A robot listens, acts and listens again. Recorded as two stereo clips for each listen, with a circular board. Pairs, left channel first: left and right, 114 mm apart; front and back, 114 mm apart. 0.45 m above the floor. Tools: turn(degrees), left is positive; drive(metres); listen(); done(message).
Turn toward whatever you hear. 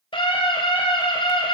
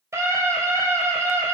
turn(degrees=120)
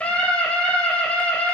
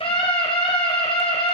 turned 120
turn(degrees=15)
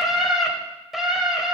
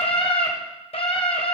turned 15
done("Facing the scream, 2 to 4 m away.")